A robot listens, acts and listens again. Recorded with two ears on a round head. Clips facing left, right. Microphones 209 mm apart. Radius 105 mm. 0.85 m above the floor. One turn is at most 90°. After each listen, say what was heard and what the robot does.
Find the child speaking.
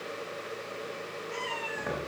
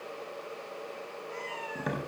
Keep listening.
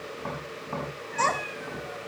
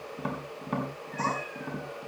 The child speaking: about 75° left or 105° left. Turn 75° left.
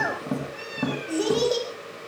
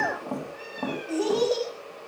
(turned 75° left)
So it is at 15° left. Turn 15° left.
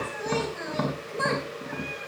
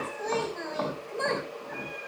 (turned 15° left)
Found it: a child speaking, straight ahead.